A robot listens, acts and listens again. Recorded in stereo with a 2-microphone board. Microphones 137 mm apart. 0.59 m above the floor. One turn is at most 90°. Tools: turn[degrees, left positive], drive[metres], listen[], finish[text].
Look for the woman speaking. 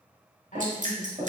Thought: The woman speaking: about 65° left or 115° left.
Action: turn[65]
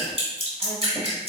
Action: listen[]
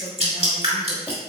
Action: listen[]
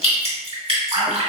Action: finish[I heard a woman speaking, but can't make it out now. It was about straight ahead or 50° left.]